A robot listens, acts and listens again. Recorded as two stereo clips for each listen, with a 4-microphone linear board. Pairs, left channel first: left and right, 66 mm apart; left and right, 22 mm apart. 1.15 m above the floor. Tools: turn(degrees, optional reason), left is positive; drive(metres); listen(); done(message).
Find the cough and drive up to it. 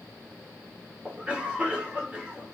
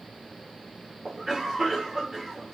turn(degrees=-20, reason="The cough: about 20° right or 160° right.")
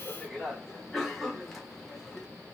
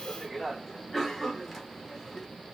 drive(metres=1.0)
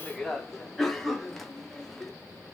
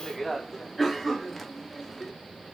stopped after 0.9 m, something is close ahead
done("I am next to the cough.")